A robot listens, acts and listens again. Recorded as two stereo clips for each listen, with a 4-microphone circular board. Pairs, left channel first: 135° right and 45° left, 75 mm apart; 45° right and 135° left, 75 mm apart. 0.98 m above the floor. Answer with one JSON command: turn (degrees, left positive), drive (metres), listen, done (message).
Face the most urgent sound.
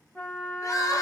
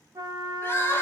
{"turn": -100}
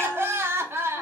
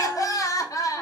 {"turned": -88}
{"turn": -10}
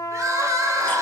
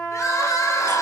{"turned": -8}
{"done": "Found it: crying, straight ahead, under 1 m away."}